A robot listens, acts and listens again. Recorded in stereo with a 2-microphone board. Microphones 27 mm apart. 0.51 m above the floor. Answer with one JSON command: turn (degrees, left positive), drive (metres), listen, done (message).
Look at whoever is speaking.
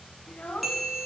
{"turn": 50}
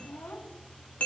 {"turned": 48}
{"turn": 80}
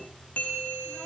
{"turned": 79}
{"listen": true}
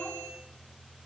{"listen": true}
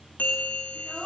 {"done": "Facing the child speaking, 2 to 4 m away."}